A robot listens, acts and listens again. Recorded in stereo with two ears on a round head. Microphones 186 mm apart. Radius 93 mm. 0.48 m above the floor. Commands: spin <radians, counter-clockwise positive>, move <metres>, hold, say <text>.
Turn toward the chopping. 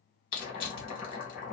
spin 0.70
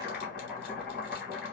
say Found it: chopping, straight ahead, 2 to 4 m away.